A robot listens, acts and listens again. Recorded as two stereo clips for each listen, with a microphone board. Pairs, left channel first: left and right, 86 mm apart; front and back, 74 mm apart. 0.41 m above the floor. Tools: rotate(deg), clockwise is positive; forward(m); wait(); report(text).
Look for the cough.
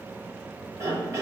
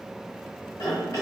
rotate(35)
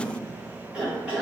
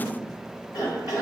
report("Facing the cough, 1 to 2 m away.")